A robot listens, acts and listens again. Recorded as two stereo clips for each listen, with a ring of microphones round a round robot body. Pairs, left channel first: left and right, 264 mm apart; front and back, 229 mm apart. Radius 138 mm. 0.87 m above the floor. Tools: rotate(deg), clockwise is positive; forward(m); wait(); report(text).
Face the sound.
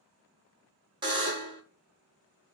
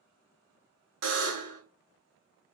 rotate(160)
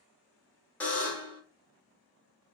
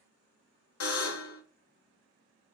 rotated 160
report("Found it: a buzzer, straight ahead.")